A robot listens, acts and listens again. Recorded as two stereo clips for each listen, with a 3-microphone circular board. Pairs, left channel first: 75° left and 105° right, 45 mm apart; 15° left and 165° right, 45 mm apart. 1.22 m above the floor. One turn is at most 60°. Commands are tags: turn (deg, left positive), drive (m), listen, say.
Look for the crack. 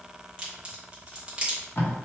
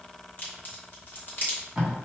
<turn deg="-30"/>
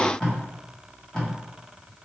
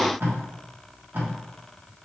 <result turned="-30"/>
<say>I heard a crack from this way, but can't make it out now.</say>